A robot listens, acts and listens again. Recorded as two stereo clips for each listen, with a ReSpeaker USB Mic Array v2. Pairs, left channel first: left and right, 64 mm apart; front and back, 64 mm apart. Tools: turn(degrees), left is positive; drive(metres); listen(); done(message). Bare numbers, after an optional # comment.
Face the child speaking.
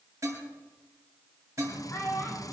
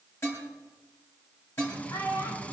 # The child speaking: 35° left.
turn(35)
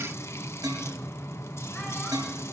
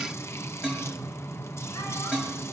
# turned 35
listen()
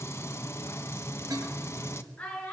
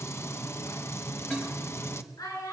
# The child speaking is now 25° left.
turn(25)
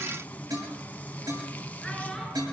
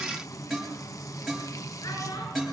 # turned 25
listen()
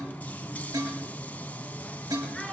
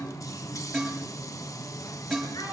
listen()
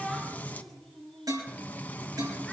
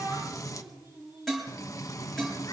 done("I heard a child speaking from this way, but can't make it out now.")